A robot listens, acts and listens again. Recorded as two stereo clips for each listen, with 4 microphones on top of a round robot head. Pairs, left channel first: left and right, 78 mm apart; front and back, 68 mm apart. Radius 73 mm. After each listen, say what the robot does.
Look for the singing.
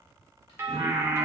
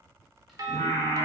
Turn 45° right.
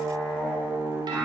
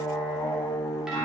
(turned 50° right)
Turn 25° right.
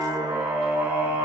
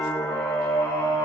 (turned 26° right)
Turn 25° right.
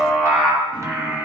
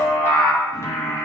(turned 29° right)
Turn 15° right.
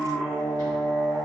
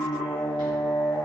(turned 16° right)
Found it: singing, straight ahead.